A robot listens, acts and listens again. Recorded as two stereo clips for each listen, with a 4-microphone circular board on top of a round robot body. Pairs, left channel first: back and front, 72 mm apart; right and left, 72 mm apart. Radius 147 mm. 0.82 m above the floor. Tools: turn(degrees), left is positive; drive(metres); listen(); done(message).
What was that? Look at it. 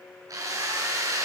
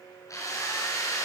turn(degrees=-45)
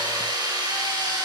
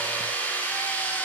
turn(degrees=-25)
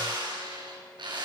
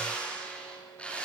turn(degrees=-15)
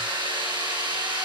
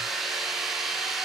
done("Found it: a drill, straight ahead.")